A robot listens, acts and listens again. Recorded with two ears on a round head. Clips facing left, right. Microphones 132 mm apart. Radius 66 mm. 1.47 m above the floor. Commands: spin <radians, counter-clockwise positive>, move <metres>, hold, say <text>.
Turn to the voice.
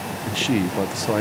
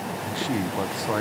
spin 0.44
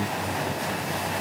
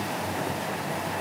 hold
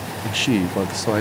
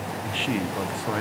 spin 2.27
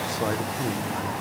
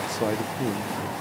spin -0.26
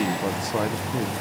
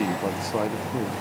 say Found it: a man speaking, straight ahead, 1 to 2 m away.